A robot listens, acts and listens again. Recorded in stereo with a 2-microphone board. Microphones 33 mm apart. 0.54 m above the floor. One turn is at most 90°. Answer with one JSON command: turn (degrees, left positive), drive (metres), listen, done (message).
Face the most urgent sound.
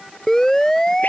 {"turn": 15}
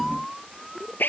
{"done": "Found it: a siren, straight ahead."}